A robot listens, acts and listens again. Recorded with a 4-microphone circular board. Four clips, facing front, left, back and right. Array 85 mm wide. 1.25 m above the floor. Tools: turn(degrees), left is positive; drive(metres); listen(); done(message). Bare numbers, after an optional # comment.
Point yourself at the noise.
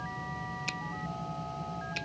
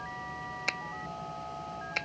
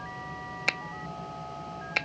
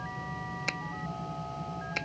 # The finger snap: straight behind.
turn(180)
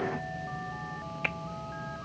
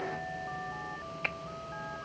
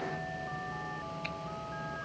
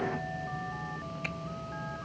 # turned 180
listen()
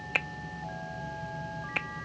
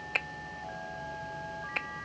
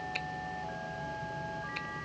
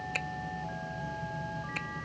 # The finger snap is now 35° left.
turn(35)
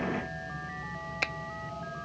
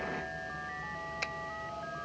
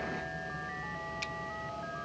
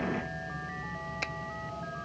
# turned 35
listen()
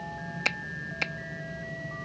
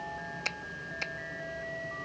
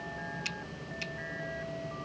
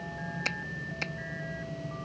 done("Facing the finger snap.")